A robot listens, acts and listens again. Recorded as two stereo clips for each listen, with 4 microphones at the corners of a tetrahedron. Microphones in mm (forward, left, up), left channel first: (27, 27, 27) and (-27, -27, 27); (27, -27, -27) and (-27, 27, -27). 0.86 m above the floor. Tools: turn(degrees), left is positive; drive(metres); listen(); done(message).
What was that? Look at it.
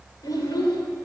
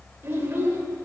turn(degrees=75)
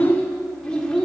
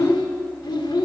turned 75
turn(degrees=-35)
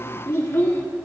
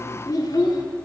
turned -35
turn(degrees=-15)
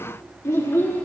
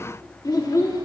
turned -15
turn(degrees=-15)
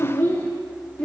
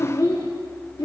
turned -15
turn(degrees=-30)
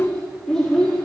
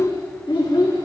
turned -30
turn(degrees=-40)
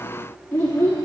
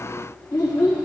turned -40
turn(degrees=-10)
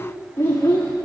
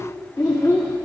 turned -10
done("Facing the child speaking.")